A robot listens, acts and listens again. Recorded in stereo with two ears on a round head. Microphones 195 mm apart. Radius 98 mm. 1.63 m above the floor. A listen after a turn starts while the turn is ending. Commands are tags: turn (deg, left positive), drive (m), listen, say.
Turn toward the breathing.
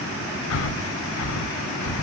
<turn deg="65"/>
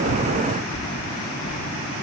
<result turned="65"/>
<turn deg="20"/>
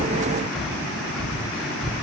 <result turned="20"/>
<say>Found it: breathing, straight ahead, 1 to 2 m away.</say>